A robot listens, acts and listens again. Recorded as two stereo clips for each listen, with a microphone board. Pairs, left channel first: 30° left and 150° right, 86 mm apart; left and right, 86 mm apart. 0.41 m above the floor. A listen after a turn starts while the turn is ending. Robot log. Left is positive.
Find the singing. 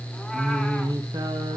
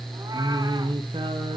note: The singing: 110° right.
cmd yaw -110
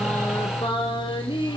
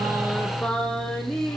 end: Facing the singing.